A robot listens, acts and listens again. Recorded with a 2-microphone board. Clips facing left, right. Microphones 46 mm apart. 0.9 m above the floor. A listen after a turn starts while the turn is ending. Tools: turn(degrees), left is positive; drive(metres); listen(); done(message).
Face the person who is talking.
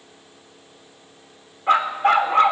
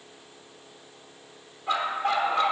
listen()
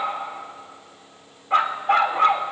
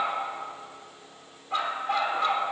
listen()
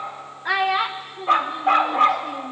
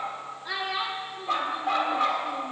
turn(degrees=70)
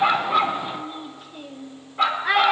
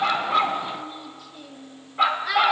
turn(degrees=40)
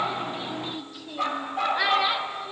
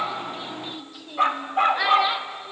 done("Found it: a child speaking, straight ahead, under 1 m away.")